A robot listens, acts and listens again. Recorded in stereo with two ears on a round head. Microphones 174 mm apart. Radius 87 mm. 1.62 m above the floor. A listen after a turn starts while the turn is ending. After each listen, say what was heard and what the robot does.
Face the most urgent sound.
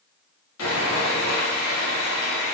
Keep listening.
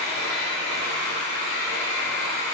Keep listening.
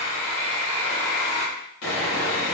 I can't make out anything urgent to turn to.